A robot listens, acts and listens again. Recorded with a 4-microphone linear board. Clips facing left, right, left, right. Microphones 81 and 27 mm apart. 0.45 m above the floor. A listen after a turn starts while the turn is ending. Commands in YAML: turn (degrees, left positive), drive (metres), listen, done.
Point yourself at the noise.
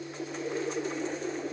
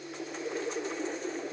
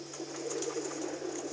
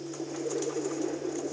listen: true
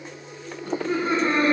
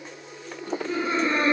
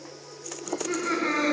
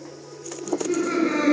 turn: 70
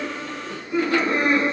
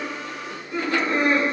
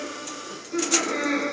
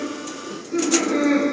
done: "Found it: laughter, straight ahead, over 4 m away."